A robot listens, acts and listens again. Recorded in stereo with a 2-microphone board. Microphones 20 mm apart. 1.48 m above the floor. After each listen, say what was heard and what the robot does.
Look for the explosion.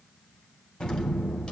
The explosion: about 50° left or 130° left. Turn 50° left.
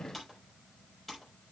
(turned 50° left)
Keep listening.
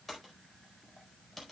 I heard an explosion, but can't make it out now. It was about straight ahead or 80° left.